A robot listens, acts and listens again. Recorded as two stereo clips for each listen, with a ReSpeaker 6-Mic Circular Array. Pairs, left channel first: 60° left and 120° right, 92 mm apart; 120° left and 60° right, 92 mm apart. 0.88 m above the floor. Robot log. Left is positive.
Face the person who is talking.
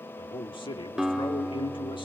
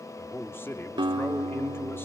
note: The man speaking: 60° left.
cmd yaw +60
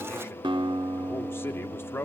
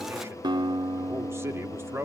end: Found it: a man speaking, straight ahead.